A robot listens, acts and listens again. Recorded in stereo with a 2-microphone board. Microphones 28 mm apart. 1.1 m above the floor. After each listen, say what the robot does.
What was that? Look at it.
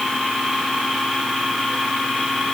Keep listening.
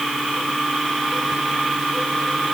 Keep listening.
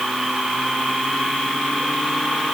I can't make out anything.